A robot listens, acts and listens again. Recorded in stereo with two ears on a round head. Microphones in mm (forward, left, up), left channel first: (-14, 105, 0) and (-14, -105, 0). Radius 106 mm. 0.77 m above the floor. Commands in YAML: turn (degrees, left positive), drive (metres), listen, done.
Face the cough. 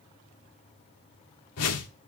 listen: true
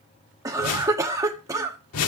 turn: -30
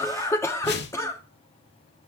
turn: 15
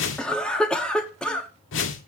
done: "Facing the cough."